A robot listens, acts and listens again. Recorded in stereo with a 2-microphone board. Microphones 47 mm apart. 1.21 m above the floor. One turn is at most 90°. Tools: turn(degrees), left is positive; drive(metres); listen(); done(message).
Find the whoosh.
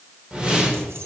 turn(degrees=-20)
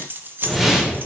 done("Facing the whoosh.")